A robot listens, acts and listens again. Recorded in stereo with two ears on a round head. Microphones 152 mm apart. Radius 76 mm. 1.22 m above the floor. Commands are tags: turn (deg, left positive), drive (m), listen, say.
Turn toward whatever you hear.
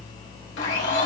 <turn deg="90"/>
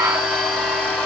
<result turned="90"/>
<say>Found it: a blender, straight ahead, 1 to 2 m away.</say>